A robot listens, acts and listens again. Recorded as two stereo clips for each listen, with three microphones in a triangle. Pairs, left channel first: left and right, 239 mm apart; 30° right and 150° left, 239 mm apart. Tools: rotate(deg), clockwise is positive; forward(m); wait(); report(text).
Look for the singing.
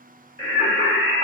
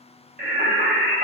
rotate(-105)
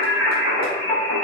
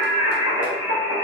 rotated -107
report("Facing the singing, 2 to 4 m away.")